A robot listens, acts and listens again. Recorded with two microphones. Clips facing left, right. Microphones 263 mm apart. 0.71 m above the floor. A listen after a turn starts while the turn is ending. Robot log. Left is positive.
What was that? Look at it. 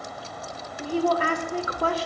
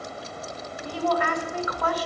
note: The woman speaking: about 30° left or 150° left.
cmd yaw +30
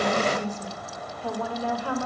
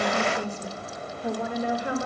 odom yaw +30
note: So it is at 20° right.
cmd yaw -20
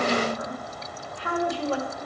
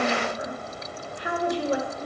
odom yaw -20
note: The woman speaking is now 20° right.
cmd yaw -20
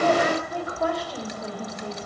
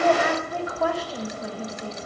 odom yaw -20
end: Found it: a woman speaking, straight ahead.